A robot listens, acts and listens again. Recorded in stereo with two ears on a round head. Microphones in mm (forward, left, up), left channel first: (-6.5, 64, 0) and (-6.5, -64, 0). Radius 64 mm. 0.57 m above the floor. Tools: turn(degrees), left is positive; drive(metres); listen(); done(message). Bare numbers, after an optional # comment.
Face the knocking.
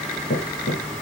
turn(90)
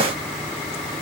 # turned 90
listen()
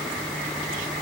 listen()
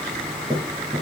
# The knocking is now 15° right.
turn(-15)
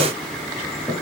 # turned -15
done("Facing the knocking.")